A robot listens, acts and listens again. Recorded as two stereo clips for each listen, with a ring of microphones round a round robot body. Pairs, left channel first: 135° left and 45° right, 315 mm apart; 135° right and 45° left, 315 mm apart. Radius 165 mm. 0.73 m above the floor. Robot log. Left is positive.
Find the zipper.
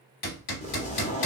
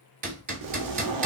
note: The zipper: 65° left.
cmd yaw +65
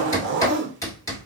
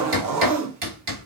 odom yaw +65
note: The zipper is now 10° left.
cmd yaw +10
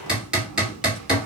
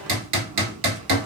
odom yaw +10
cmd idle
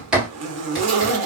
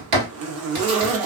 end: Facing the zipper, under 1 m away.